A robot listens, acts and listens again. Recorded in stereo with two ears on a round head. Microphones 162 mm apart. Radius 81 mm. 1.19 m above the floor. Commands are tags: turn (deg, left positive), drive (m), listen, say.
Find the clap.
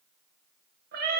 <listen/>
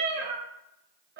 <listen/>
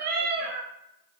<say>I can't make out a clap to turn to.</say>